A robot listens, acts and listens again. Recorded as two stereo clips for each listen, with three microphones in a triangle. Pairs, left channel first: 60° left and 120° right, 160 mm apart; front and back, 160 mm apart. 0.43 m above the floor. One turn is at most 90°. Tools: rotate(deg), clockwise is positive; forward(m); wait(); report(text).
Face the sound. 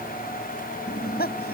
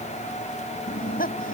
rotate(-35)
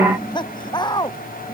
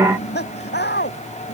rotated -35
report("Facing the laughter.")